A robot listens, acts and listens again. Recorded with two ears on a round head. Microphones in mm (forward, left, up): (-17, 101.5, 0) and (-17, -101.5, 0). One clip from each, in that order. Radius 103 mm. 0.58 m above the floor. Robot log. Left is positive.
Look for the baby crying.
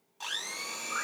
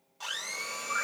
cmd idle
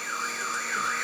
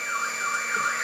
cmd idle
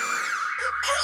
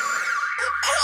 note: The baby crying: about 45° right or 135° right.
cmd yaw -45
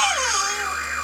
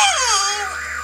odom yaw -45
note: So it is at 85° right.
cmd yaw -85
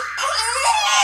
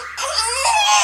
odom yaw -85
end: Facing the baby crying.